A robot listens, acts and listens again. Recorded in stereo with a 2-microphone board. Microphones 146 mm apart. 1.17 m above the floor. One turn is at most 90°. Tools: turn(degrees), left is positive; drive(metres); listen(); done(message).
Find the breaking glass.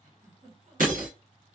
turn(degrees=-65)
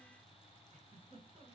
listen()
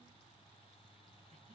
done("I heard breaking glass, but can't make it out now. It was about straight ahead or 50° right.")